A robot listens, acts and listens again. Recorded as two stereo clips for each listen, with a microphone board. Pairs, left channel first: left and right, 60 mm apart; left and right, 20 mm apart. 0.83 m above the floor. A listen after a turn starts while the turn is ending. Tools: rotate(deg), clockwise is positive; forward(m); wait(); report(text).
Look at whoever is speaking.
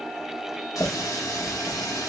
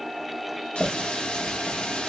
wait()
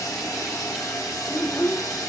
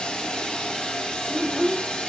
rotate(-50)
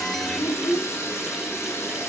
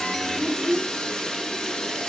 rotate(-80)
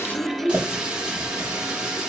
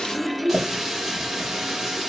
rotate(-15)
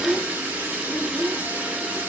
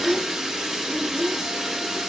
report("Facing the child speaking, under 1 m away.")